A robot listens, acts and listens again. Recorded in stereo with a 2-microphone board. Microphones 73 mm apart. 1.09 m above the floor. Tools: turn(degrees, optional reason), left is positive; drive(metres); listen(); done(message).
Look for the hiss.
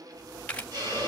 turn(degrees=-55, reason="The hiss: about 55° right or 125° right.")
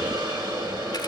turn(degrees=-70, reason="So it is at 70° right.")
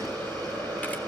turn(degrees=15, reason="The hiss is now 15° left.")
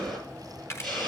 done("Facing the hiss.")